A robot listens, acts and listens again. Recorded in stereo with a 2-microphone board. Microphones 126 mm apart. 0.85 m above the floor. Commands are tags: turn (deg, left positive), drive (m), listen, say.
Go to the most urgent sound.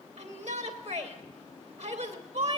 <turn deg="-60"/>
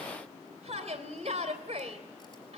<turn deg="-55"/>
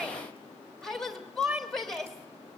<drive m="1.0"/>
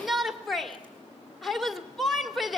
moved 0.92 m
<drive m="1.0"/>
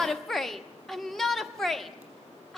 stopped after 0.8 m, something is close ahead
<say>Arrived at the shout, straight ahead.</say>